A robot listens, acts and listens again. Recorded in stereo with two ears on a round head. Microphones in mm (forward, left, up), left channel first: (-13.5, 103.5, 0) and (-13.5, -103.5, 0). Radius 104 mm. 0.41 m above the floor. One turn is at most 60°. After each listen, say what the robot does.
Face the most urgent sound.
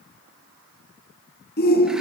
Turn 40° left.
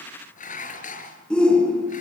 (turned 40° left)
Found it: a shout, straight ahead.